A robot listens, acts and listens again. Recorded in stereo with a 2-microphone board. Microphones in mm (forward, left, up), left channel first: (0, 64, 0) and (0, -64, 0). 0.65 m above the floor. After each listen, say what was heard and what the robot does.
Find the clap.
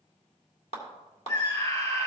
The clap: about 50° left or 130° left. Turn 50° left.
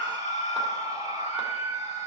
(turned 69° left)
Keep listening.
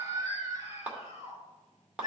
So it is at 10° right. Turn 10° right.
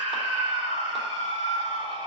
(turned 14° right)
Keep listening.
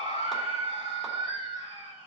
Keep listening.
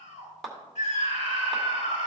Facing the clap.